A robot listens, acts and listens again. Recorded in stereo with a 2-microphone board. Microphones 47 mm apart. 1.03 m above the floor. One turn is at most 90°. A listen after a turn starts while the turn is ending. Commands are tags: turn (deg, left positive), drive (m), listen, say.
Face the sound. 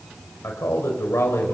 <turn deg="75"/>
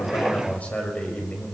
<turn deg="35"/>
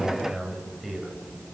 <say>Facing the man speaking.</say>